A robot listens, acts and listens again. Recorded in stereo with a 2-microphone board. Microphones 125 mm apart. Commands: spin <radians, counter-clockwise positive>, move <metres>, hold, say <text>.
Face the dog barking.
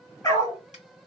spin 0.52
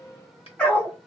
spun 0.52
spin 0.17
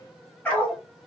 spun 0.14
spin 0.26
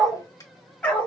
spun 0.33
spin 0.26
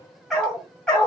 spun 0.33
spin 0.17
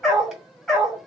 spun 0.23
say Facing the dog barking.